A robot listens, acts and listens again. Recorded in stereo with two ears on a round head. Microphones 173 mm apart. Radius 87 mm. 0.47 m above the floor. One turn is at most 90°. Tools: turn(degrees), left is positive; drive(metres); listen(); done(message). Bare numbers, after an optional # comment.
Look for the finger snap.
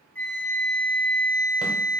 listen()
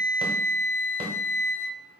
listen()
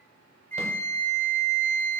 done("I can't make out a finger snap to turn to.")